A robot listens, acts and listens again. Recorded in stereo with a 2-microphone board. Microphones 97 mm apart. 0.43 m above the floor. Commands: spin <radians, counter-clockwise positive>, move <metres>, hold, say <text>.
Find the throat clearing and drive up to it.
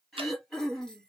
spin 0.52
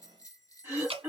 spin -0.52
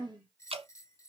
spin -0.44
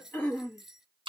spin 0.26
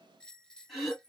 move 1.0
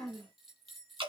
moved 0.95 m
move 1.0
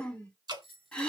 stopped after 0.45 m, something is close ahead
spin 0.17
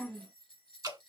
say Arrived at the throat clearing, straight ahead.